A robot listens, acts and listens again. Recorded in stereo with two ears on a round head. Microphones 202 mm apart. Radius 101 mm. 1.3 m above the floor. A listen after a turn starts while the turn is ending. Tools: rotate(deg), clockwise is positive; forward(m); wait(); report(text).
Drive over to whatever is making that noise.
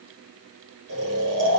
rotate(70)
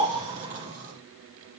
rotate(35)
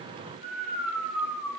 forward(1.0)
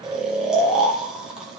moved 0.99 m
forward(1.0)
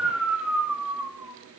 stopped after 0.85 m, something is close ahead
report("Arrived at the snoring, straight ahead.")